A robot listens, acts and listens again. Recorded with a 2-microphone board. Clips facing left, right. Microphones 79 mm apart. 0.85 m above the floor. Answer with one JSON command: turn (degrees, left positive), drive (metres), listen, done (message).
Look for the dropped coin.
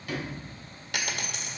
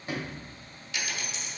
{"turn": 60}
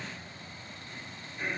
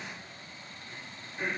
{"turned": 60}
{"listen": true}
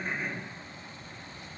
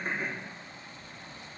{"done": "I heard a dropped coin, but can't make it out now. It was about straight ahead or 60° left."}